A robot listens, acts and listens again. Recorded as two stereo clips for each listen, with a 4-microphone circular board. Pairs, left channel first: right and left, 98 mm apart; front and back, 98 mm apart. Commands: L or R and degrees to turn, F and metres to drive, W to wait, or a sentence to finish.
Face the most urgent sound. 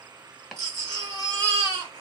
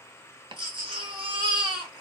L145
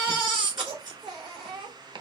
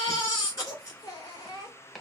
L55
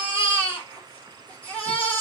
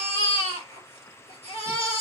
R15
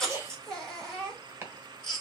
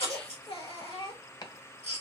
Found it: a baby crying, straight ahead, 2 to 4 m away.